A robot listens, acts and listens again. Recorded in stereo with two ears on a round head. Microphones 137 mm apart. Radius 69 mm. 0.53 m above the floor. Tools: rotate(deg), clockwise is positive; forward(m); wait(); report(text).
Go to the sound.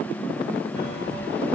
rotate(-90)
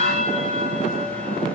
forward(1.0)
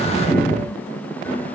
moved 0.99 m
rotate(-15)
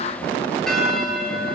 forward(1.0)
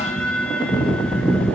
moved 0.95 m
forward(1.0)
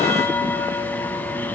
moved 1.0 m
rotate(-15)
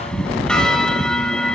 forward(1.0)
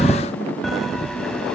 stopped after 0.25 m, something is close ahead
report("I am next to the bell.")